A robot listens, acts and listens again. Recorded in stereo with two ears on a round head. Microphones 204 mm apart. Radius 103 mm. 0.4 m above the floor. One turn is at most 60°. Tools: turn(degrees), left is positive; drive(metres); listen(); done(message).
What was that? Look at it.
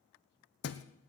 turn(degrees=50)
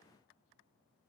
listen()
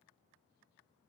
done("I heard a thud, but can't make it out now. It was about straight ahead or 80° left.")